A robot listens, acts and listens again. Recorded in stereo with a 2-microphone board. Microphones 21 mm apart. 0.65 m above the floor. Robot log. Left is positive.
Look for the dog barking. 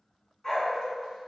note: The dog barking: about 25° left or 155° left.
cmd yaw +25
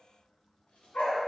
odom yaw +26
note: So it is at 105° left.
cmd yaw +105
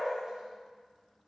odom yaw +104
note: The dog barking is now 35° right.
cmd yaw -35
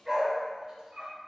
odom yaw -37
note: The dog barking is now 20° right.
cmd yaw -20
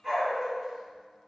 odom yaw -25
end: Found it: a dog barking, straight ahead, 2 to 4 m away.